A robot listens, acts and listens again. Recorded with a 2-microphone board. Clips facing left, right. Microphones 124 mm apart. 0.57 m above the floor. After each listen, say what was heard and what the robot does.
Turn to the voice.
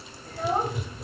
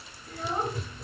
The child speaking: about 50° left or 130° left. Turn 50° left.
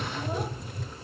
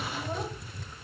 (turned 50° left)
Keep listening.
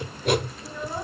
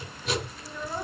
Keep listening.
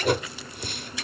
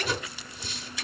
I heard a child speaking, but can't make it out now. It was about straight ahead or 80° left.